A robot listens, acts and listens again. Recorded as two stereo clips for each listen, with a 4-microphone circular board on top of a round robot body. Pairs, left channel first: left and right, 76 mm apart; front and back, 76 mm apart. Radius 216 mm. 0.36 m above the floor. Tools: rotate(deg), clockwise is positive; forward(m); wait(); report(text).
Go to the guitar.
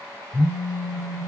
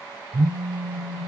wait()
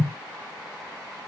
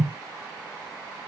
wait()
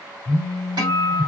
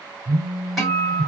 rotate(95)
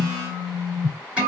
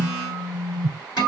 rotate(15)
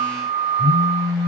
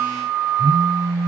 forward(1.0)
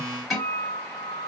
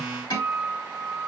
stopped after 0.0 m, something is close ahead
report("Something is in my way. I am facing the guitar but have not reached it.")